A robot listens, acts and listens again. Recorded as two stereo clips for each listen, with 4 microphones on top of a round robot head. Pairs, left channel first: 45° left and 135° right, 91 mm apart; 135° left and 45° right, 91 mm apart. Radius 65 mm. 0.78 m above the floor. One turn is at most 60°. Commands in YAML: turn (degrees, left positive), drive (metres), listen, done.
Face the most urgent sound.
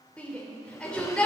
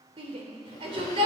turn: -30
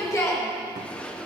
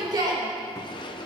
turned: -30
done: "Facing the shout."